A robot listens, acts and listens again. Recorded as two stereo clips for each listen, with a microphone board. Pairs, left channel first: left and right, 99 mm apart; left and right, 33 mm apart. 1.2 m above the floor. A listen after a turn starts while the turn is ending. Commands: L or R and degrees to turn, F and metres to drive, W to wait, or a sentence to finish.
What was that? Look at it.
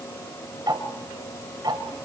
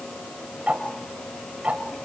R45
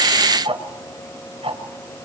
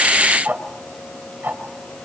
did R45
R90
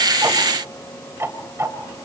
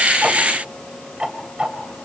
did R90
R25
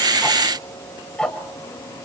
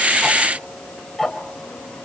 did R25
L10
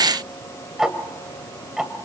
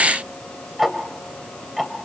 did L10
Facing the ticking, 2 to 4 m away.